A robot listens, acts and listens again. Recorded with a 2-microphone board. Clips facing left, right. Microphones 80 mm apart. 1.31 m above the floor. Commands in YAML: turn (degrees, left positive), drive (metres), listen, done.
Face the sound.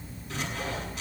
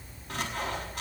turn: -50
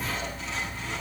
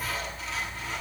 done: "Found it: sawing, straight ahead."